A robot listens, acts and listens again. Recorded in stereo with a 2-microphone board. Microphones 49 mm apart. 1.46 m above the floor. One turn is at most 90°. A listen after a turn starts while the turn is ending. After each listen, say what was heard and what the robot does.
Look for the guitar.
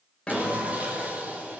The guitar: about 20° left or 160° left. Turn 20° left.
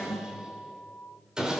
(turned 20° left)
So it is at 140° left. Turn 90° left.
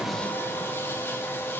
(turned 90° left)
Nothing new. It was at 50° left. Turn 50° left.
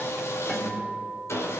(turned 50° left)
The guitar is now 25° left. Turn 25° left.
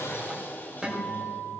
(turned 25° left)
The guitar is now 10° right. Turn 10° right.
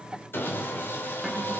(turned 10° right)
Facing the guitar.